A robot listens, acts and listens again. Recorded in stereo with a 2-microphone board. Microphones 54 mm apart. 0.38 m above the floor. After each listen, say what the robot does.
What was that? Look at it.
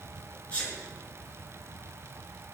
Turn 25° left.
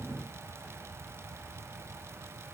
Keep listening.
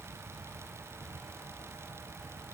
I heard a sneeze, but can't make it out now. It was about straight ahead or 130° left.